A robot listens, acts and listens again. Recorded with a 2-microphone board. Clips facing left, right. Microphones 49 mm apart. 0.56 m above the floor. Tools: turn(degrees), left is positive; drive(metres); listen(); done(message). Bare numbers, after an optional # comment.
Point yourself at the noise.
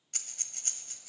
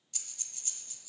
# The breathing: about 55° left or 125° left.
turn(55)
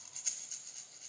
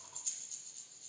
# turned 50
# So it is at 75° left.
turn(75)
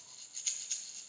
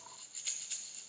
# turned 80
done("Facing the breathing.")